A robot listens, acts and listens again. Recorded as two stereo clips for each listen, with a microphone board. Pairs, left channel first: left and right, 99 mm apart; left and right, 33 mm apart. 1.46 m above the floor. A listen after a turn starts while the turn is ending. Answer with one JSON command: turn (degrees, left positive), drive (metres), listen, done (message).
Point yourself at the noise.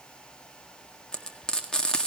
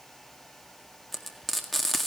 {"turn": 30}
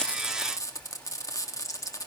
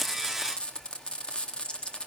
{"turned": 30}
{"turn": 145}
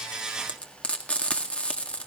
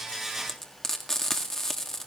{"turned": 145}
{"turn": 15}
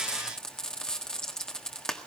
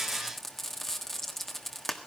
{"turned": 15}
{"done": "Found it: frying, straight ahead."}